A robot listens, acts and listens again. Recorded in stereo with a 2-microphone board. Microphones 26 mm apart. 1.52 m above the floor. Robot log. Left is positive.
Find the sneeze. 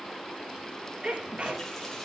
note: The sneeze: about 50° right or 130° right.
cmd yaw -50
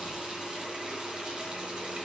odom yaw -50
cmd idle
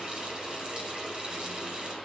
end: I heard a sneeze, but can't make it out now. It was about straight ahead or 80° right.